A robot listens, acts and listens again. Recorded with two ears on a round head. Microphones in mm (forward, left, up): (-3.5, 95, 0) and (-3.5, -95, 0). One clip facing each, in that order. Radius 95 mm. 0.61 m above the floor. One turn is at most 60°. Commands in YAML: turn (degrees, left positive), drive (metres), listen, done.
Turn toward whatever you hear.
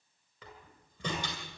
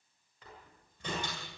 turn: 60
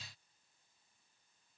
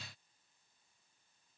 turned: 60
listen: true
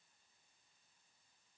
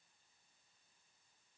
done: "I heard a door slam, but can't make it out now. It was about 5° left or 55° left."